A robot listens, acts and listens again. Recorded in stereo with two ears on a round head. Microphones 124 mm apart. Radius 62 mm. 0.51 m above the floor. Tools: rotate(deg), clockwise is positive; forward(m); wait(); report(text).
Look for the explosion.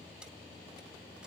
wait()
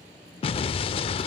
rotate(-40)
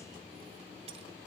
wait()
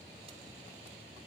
report("I heard an explosion, but can't make it out now. It was about straight ahead or 100° left.")